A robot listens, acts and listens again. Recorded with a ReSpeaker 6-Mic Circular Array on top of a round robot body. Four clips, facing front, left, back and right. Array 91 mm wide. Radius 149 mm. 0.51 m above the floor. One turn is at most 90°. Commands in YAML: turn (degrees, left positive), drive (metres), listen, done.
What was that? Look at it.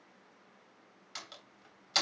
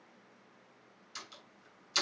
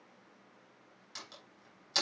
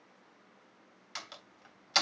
turn: -80
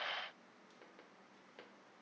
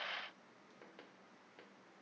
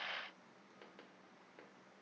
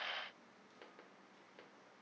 done: "Facing where the door slam came from. I can't hear it now."